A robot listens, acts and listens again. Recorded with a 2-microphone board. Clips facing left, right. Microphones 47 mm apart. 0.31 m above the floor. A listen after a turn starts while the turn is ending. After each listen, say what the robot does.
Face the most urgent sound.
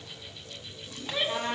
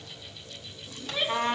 Turn 35° left.
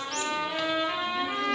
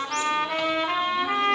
Keep listening.
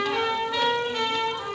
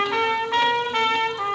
Keep listening.
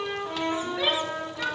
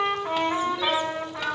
Turn 105° left.
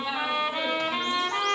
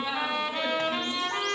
Keep listening.
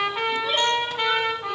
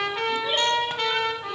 Keep listening.
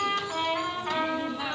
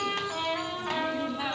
Turn 15° right.
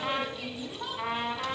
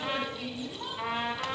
Facing the shout.